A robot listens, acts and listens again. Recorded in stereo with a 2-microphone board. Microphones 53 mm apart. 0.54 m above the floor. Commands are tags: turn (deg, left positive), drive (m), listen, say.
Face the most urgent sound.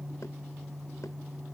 <listen/>
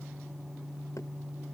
<listen/>
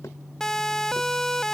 <turn deg="30"/>
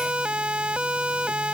<turn deg="-20"/>
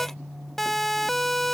<say>Facing the siren.</say>